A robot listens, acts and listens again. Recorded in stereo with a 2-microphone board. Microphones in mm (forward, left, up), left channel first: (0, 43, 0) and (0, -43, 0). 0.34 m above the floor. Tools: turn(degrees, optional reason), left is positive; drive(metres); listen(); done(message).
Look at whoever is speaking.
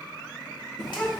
turn(degrees=-30)
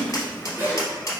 turn(degrees=25, reason="So it is at 25° left.")
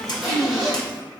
done("Found it: a child speaking, straight ahead, under 1 m away.")